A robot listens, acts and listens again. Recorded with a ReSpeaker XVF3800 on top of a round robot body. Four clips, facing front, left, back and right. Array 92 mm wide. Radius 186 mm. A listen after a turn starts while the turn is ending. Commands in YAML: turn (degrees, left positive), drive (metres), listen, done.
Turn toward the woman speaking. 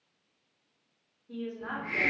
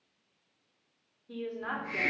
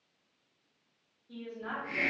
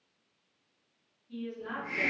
turn: 70
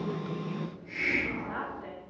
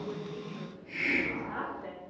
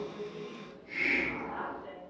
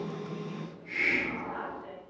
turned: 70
turn: 35
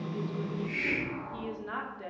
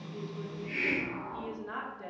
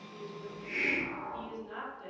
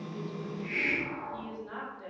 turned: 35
turn: 20
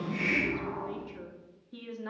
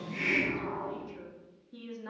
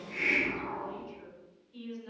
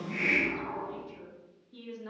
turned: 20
turn: 10
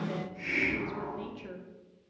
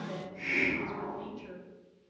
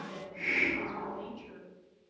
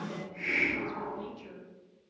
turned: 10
done: "Facing the woman speaking."